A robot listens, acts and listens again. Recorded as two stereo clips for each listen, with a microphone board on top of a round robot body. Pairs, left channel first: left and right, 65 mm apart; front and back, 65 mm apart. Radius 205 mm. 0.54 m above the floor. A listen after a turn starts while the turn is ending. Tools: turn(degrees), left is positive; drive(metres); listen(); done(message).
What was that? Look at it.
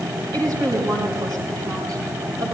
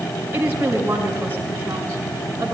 turn(degrees=-115)
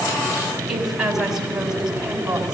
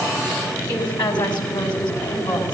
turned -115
turn(degrees=-10)
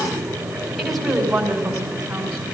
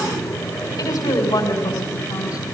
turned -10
done("Facing the woman speaking, over 4 m away.")